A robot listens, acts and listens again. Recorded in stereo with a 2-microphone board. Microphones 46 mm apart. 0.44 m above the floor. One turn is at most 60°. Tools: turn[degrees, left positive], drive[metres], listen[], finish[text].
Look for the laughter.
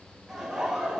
Action: turn[-30]
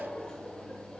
Thought: So it is at 20° left.
Action: turn[20]
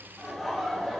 Action: finish[Facing the laughter.]